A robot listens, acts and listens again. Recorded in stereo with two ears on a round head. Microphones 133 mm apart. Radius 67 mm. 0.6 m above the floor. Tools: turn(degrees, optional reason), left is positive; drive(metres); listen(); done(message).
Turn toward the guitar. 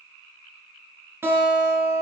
turn(degrees=-15, reason="The guitar: about 15° right or 165° right.")
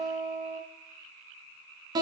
turn(degrees=-150, reason="So it is at 150° right.")
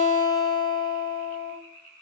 turn(degrees=25, reason="The guitar is now 25° left.")
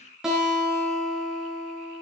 done("Found it: a guitar, straight ahead.")